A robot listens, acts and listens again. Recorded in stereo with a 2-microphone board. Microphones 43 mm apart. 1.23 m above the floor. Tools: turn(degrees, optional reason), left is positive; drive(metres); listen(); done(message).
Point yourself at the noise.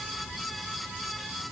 listen()
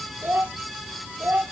turn(degrees=-55, reason="The child speaking: about 55° right or 125° right.")
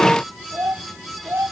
turn(degrees=-80, reason="So it is at 80° right.")
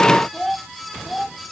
done("Found it: a child speaking, straight ahead.")